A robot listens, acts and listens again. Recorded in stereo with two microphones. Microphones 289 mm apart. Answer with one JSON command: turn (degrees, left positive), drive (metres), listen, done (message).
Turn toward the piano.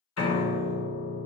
{"turn": 65}
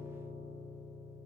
{"done": "Found it: a piano, straight ahead, under 1 m away."}